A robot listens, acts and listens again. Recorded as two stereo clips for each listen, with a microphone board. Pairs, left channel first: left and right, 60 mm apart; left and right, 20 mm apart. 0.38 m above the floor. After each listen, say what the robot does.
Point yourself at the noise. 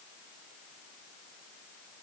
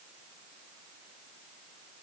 Keep listening.
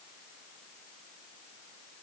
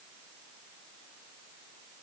Keep listening.
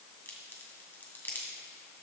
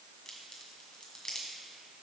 Turn 35° left.
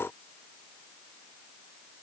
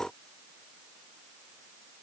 Keep listening.
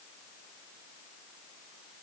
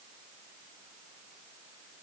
I heard a crack, but can't make it out now. It was about straight ahead or 110° left.